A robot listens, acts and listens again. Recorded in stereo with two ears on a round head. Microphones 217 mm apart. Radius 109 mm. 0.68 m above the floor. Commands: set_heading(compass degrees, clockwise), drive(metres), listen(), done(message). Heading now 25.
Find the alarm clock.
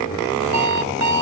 set_heading(115)
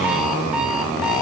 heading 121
listen()
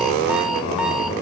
listen()
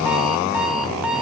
done("Found it: an alarm clock, straight ahead.")